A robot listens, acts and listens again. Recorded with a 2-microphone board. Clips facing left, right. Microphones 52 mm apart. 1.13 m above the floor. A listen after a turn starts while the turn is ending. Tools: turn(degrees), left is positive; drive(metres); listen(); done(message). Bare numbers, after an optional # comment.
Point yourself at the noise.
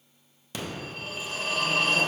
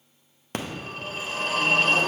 # The phone ringing: about 45° right or 135° right.
turn(-45)
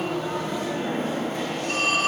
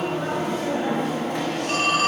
# So it is at 85° right.
turn(-85)
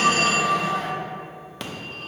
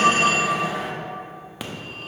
# The phone ringing is now 10° right.
turn(-10)
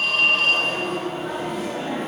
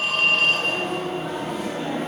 done("Found it: a phone ringing, straight ahead, under 1 m away.")